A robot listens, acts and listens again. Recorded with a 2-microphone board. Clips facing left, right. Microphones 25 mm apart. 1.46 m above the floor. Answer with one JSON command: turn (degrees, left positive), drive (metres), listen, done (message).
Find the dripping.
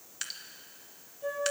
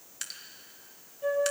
{"turn": 30}
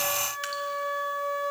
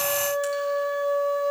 {"listen": true}
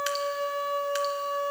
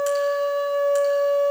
{"listen": true}
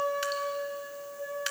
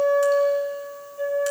{"done": "I heard dripping, but can't make it out now. It was about 25° right or 145° left."}